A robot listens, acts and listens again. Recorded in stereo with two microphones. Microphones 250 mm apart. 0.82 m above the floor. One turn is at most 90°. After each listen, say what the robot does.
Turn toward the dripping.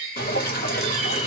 Turn 40° left.
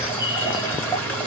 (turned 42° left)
Turn 10° left.
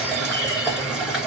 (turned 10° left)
Facing the dripping, 1 to 2 m away.